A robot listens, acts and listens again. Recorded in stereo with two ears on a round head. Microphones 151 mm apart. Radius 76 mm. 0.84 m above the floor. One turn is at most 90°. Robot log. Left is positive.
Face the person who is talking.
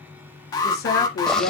note: The woman speaking: about 65° left or 115° left.
cmd yaw +65
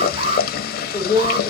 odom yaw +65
note: So it is at 15° left.
cmd yaw +15
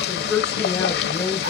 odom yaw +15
note: The woman speaking is now 10° left.
cmd yaw +10
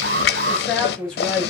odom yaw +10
end: Facing the woman speaking, over 4 m away.